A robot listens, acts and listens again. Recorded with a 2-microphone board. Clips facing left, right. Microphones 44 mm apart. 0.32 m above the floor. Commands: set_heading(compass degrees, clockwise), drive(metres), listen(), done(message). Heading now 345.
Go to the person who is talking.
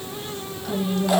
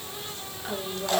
set_heading(10)
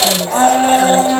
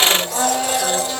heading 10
listen()
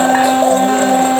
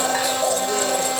listen()
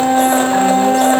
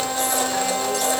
done("I heard a woman speaking, but can't make it out now. It was about straight ahead or 130° right. I did not reach it.")